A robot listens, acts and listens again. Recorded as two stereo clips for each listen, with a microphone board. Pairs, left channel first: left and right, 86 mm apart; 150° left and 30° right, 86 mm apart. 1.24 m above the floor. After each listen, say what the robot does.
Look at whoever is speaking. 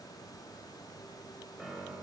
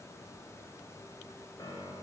Keep listening.
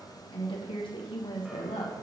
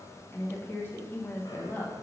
Turn 85° left.
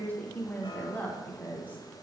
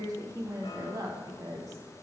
Turn 20° left.
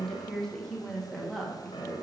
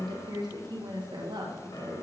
Facing the woman speaking, 1 to 2 m away.